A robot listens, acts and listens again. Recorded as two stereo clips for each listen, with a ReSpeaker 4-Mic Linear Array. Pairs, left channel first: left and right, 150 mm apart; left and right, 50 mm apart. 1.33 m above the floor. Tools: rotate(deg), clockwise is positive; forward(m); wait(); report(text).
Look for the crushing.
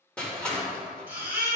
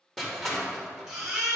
rotate(-30)
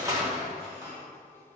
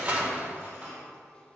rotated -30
rotate(20)
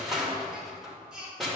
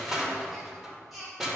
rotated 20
report("Found it: crushing, straight ahead, 1 to 2 m away.")